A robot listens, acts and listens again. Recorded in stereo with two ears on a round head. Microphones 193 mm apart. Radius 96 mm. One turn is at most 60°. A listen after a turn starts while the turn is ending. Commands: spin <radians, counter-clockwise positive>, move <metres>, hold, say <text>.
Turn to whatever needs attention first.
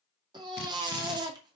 spin -0.35
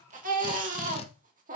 spin -1.05
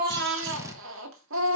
spin -1.05
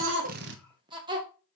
spin -0.44
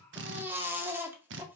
spin -0.17
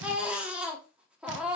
say Found it: a baby crying, straight ahead.